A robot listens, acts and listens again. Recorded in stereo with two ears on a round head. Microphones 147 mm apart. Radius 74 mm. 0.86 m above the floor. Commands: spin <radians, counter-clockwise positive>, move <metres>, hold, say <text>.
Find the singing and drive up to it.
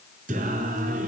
spin -0.79
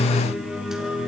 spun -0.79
move 1.0
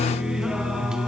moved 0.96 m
move 1.0
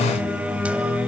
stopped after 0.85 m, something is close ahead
spin -0.17
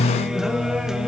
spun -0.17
say Arrived at the singing, straight ahead.